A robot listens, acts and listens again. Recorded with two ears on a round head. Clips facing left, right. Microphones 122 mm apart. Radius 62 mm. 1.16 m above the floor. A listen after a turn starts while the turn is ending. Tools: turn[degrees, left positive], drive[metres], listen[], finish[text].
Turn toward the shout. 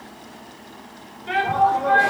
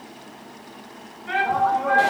Thought: The shout: about 30° left or 150° left.
Action: turn[30]
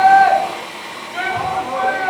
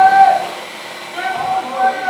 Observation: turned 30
Action: finish[Facing the shout, over 4 m away.]